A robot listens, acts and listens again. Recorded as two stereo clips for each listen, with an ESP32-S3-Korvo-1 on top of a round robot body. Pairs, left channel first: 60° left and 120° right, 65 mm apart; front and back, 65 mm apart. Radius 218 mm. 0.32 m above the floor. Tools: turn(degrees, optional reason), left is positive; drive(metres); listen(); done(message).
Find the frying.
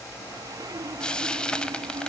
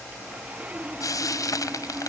turn(degrees=-15, reason="The frying: 15° right.")
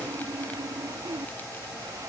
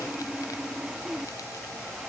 listen()
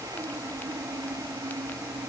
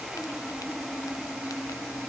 listen()
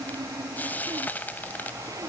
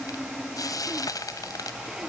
done("Facing the frying.")